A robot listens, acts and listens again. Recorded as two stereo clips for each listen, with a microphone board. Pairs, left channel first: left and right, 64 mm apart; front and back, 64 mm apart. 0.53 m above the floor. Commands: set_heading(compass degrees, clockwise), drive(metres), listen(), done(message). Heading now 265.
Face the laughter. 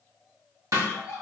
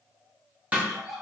set_heading(170)
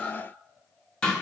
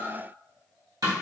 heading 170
set_heading(155)
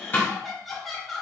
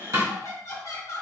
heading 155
done("Found it: laughter, straight ahead.")